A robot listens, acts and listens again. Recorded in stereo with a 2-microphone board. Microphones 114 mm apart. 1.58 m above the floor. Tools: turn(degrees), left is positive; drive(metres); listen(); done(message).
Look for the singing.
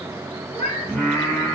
turn(degrees=20)
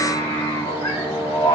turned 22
turn(degrees=135)
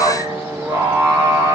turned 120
turn(degrees=-30)
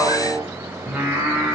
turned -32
turn(degrees=-15)
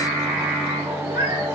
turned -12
turn(degrees=-10)
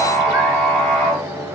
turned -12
done("Facing the singing.")